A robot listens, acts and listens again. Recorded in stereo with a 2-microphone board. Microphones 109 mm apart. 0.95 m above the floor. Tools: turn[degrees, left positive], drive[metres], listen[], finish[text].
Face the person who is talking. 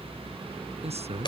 Thought: The man speaking: about 75° right or 105° right.
Action: turn[-75]
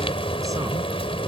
Action: listen[]
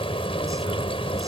Action: listen[]
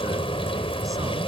Action: finish[I heard a man speaking, but can't make it out now. It was about straight ahead or 30° right.]